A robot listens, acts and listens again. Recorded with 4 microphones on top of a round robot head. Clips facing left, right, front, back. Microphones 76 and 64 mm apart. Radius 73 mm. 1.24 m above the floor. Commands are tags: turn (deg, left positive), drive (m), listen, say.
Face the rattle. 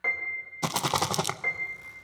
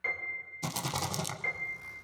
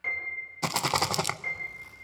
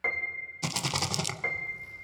<turn deg="55"/>
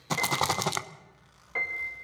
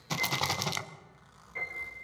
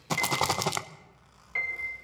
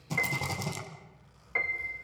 <turn deg="30"/>
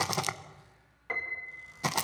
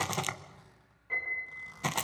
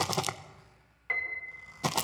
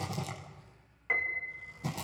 <turn deg="10"/>
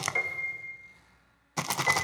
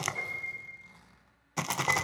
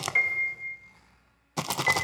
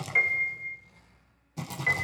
<say>Found it: a rattle, straight ahead.</say>